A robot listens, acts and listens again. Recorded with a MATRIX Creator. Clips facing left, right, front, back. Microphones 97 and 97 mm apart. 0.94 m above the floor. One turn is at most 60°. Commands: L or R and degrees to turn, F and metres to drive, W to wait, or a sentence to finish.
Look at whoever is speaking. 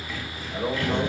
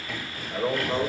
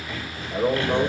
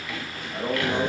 R15
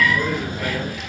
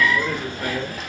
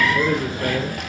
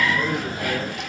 W
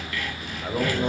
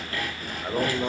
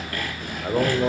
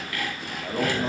Facing the man speaking, 2 to 4 m away.